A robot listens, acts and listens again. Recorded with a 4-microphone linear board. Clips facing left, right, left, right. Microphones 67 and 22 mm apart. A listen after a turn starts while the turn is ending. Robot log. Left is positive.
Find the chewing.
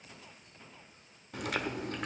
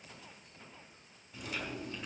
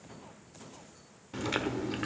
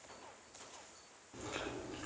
note: The chewing: about 65° left or 115° left.
cmd yaw +65
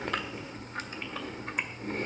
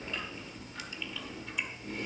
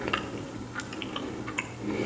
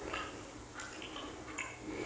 note: So it is at 50° left.
cmd yaw +50
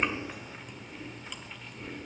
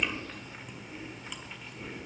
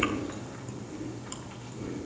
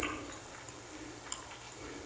end: Found it: chewing, straight ahead, 1 to 2 m away.